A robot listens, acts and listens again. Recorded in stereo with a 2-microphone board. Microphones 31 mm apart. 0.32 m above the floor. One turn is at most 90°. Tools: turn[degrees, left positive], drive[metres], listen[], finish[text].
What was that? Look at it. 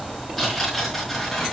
Action: turn[30]
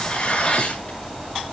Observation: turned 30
Thought: So it is at 145° left.
Action: turn[90]
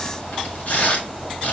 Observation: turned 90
Thought: The tearing paper is now 55° left.
Action: turn[55]
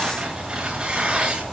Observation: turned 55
Thought: The tearing paper is now 30° right.
Action: turn[-30]
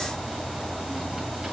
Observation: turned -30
Action: listen[]
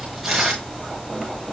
Thought: The tearing paper is now 10° right.
Action: turn[-10]
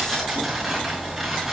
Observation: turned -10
Action: finish[Found it: tearing paper, straight ahead.]